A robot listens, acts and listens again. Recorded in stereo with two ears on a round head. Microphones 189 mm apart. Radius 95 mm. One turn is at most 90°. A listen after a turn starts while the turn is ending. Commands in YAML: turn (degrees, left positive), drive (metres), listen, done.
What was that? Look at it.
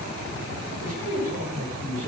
turn: -40
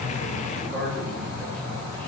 done: "Found it: a man speaking, straight ahead, over 4 m away."